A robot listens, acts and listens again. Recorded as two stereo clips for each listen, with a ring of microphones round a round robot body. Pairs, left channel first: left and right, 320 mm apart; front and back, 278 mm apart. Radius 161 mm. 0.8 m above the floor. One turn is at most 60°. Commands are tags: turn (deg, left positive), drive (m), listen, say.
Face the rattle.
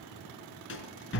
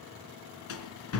<turn deg="35"/>
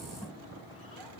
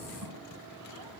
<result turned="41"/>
<listen/>
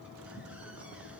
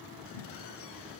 <listen/>
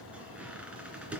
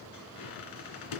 <say>Found it: a rattle, straight ahead, 2 to 4 m away.</say>